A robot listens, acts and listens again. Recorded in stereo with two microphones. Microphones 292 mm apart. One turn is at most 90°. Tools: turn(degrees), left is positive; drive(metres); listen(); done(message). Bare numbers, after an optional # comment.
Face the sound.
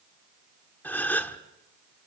turn(30)
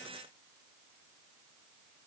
listen()
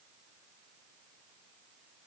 done("I heard a gasp, but can't make it out now. It was about 25° right or 145° left.")